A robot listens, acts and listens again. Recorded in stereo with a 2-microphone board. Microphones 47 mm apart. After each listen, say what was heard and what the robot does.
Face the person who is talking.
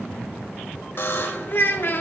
The child speaking: about 50° left or 130° left. Turn 50° left.
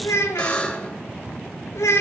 So it is at 80° left. Turn 80° left.
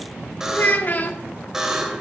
The child speaking is now 40° left. Turn 40° left.
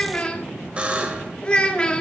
The child speaking is now 20° left. Turn 20° left.
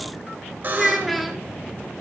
Found it: a child speaking, straight ahead, 1 to 2 m away.